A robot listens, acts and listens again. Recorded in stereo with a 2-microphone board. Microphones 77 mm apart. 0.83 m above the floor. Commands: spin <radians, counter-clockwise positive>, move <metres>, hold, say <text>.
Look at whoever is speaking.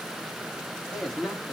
spin 0.52
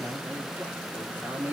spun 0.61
spin -0.61
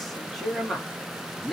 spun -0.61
say Found it: a man speaking, straight ahead, 1 to 2 m away.